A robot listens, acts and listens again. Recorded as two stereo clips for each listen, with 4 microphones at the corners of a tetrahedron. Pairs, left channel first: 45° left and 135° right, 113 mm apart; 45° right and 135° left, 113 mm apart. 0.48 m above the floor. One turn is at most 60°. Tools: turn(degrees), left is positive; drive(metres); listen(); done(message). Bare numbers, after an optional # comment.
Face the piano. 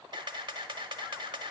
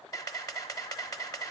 listen()
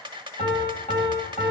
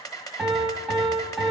# The piano: 45° left.
turn(45)
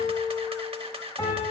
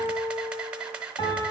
done("Found it: a piano, straight ahead.")